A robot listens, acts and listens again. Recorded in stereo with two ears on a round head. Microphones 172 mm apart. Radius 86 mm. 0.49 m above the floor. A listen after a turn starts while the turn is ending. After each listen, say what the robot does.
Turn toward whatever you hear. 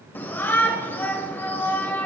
Turn 30° left.
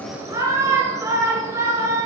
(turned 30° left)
Turn 20° right.
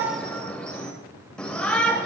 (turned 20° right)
Facing the shout.